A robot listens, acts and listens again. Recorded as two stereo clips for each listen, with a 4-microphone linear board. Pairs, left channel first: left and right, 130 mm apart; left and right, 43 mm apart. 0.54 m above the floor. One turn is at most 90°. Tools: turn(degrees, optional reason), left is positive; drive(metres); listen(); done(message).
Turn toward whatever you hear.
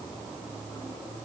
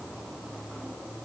listen()
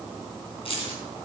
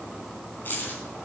turn(degrees=45, reason="The keys jangling: about 45° left or 135° left.")
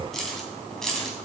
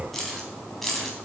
done("Found it: keys jangling, straight ahead.")